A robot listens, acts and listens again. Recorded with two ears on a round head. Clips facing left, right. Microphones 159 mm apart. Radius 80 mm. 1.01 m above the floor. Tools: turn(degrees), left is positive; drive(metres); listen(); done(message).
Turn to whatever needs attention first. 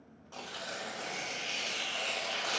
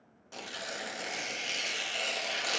listen()
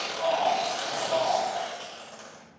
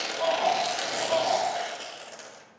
turn(degrees=-90)
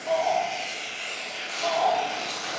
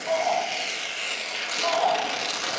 done("Facing the shout.")